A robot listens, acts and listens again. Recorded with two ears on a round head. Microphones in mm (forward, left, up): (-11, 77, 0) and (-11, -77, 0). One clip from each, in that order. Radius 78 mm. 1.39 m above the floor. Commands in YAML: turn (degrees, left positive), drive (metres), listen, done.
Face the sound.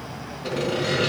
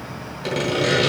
turn: -65
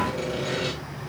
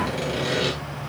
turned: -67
turn: -20
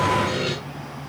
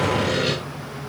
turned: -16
done: "Facing the sawing."